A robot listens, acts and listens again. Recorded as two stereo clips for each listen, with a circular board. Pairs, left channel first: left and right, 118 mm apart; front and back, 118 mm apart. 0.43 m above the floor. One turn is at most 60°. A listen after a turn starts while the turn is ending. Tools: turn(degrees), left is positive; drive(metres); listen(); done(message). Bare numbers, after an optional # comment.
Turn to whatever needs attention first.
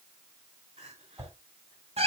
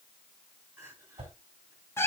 # The crying: 110° right.
turn(-60)
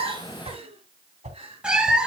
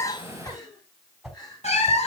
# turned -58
# The crying is now 55° right.
turn(-55)
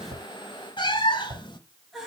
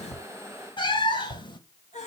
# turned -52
done("Found it: crying, straight ahead.")